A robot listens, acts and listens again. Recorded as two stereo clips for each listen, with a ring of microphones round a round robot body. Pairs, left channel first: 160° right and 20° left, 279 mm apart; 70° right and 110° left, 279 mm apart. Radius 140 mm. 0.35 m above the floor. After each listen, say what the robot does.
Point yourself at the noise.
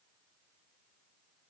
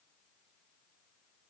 Keep listening.
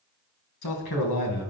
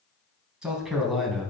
Turn 155° right.
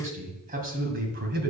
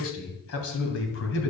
Turn 25° right.
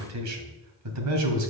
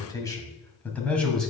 Turn 20° left.
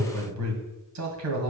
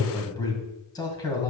Facing the man speaking, 2 to 4 m away.